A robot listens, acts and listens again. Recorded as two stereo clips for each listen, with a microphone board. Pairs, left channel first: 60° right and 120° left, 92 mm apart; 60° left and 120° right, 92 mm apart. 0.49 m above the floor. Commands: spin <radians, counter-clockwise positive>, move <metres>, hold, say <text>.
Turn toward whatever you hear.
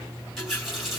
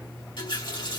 spin 0.61
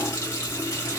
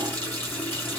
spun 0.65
say Found it: a running tap, straight ahead, 1 to 2 m away.